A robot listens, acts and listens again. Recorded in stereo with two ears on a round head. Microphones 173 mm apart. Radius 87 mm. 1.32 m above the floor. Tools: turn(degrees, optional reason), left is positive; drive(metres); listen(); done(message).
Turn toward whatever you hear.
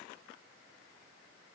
listen()
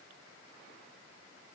listen()
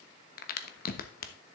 turn(degrees=45, reason="The crack: about 45° left or 135° left.")
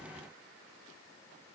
listen()
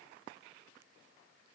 done("I heard a crack, but can't make it out now. It was about straight ahead or 90° left.")